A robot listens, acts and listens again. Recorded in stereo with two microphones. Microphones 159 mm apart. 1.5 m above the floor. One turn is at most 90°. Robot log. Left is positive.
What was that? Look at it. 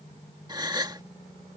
note: The gasp: about 25° right or 155° right.
cmd yaw -25
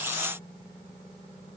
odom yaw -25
cmd idle
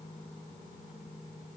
end: I heard a gasp, but can't make it out now. It was about straight ahead or 130° right.